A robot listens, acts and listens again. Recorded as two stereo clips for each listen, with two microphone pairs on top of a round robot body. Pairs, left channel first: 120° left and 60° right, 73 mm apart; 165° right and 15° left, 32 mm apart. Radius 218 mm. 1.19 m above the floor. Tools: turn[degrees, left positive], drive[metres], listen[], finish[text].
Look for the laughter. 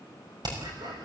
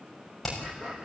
Thought: The laughter: 35° right.
Action: turn[-35]
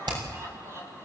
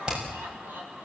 Action: finish[Found it: laughter, straight ahead.]